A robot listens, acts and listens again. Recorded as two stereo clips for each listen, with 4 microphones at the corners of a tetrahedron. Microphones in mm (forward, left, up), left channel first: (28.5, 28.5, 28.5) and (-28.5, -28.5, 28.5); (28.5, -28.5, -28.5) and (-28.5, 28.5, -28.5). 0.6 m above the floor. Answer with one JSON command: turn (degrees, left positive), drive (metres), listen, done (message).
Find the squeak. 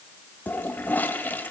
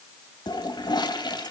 {"listen": true}
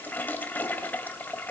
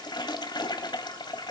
{"listen": true}
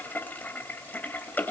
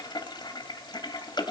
{"done": "I can't make out a squeak to turn to."}